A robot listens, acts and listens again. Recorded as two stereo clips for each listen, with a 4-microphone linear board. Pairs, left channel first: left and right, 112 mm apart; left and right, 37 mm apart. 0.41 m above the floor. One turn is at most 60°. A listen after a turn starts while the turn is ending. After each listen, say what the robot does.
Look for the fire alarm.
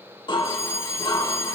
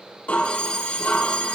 Turn 25° left.
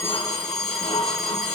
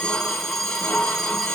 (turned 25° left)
Found it: a fire alarm, straight ahead.